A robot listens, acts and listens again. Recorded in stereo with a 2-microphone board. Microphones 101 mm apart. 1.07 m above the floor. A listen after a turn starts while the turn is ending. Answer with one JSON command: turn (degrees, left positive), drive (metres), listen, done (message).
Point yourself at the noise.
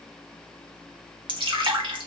{"turn": -55}
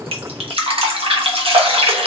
{"turn": -70}
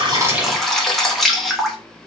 {"done": "Facing the dripping, 1 to 2 m away."}